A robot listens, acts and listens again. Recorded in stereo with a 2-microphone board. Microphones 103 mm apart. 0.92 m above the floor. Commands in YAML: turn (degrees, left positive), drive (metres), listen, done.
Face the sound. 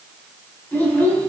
turn: 15
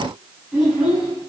turn: -30
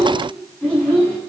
turn: 15
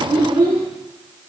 turn: -10
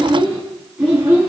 turn: -10
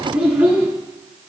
done: "Facing the child speaking."